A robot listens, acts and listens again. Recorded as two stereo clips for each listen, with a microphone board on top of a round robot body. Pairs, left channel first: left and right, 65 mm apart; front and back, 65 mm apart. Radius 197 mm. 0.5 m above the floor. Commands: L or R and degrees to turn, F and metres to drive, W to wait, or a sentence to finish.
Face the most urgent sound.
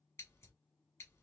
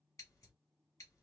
W
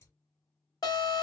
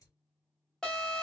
L80
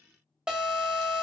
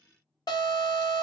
R10
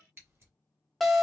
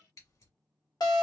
Found it: an alarm, straight ahead.